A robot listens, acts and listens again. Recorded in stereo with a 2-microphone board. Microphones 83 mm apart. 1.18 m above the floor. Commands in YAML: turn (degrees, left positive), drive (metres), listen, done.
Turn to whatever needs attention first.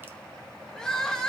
turn: 30
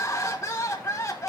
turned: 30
turn: 145
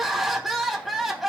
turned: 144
done: "Found it: crying, straight ahead, 1 to 2 m away."